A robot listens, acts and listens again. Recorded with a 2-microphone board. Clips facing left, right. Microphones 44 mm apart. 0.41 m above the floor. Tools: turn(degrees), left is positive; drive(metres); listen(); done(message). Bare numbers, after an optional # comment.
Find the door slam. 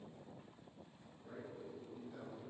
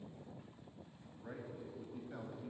listen()
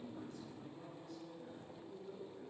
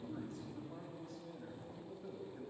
listen()
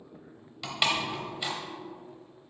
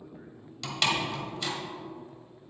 turn(30)
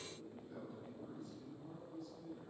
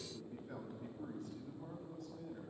listen()
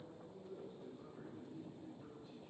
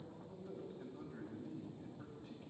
done("I heard a door slam, but can't make it out now. It was about 15° right or 135° left.")